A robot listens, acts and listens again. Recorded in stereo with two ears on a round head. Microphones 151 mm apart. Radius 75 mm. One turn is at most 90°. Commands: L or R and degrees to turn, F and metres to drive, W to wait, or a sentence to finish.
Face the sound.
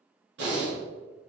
R75
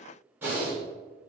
R15
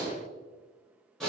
Found it: breathing, straight ahead.